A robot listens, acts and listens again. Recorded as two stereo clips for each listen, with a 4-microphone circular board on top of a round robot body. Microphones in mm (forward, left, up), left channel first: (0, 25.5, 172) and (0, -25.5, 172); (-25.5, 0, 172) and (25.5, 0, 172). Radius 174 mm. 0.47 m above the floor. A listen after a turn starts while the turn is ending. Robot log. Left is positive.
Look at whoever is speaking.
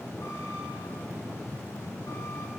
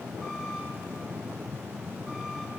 cmd idle
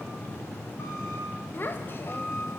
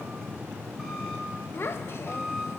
note: The child speaking: 140° left.
cmd yaw +140
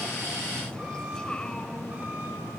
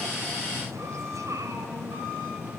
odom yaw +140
note: The child speaking is now 15° left.
cmd yaw +15
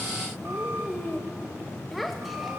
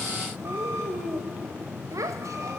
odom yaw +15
end: Facing the child speaking.